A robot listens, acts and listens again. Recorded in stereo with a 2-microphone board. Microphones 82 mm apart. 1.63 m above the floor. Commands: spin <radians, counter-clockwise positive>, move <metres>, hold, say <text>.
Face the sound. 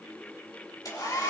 spin 0.87
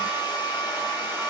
spin 1.40
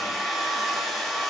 say Facing the hair dryer, over 4 m away.